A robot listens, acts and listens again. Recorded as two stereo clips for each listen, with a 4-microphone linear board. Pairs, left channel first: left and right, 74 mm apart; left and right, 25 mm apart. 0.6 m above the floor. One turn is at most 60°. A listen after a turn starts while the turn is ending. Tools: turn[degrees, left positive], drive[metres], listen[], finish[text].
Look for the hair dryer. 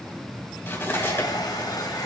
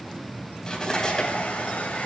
Action: turn[60]
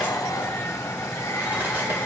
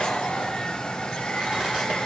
Thought: So it is at 40° left.
Action: turn[40]
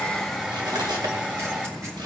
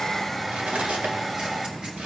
Thought: The hair dryer is now 10° right.
Action: turn[-10]
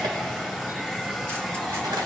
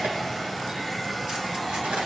Action: finish[Facing the hair dryer.]